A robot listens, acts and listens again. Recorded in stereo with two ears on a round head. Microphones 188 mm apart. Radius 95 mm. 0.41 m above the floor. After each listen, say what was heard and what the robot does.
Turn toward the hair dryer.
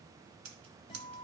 Keep listening.
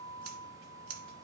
Keep listening.
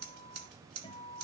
I can't make out a hair dryer, only a guitar and scissors.